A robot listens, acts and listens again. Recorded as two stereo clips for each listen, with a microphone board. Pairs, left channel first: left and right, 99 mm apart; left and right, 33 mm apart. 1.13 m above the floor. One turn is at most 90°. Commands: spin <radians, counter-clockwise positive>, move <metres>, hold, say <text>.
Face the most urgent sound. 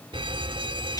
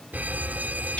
spin -1.05
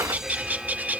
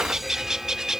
say Facing the alarm.